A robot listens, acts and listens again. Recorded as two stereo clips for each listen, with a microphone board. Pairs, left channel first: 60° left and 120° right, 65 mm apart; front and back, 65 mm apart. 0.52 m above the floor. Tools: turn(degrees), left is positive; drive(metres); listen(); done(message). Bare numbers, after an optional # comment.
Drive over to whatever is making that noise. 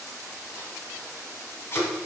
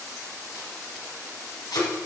# The tape being pulled: 10° left.
turn(10)
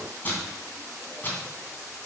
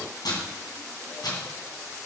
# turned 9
drive(1.0)
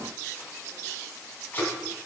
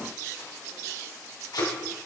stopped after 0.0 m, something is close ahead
done("Something is in my way. I am facing the tape being pulled but have not reached it.")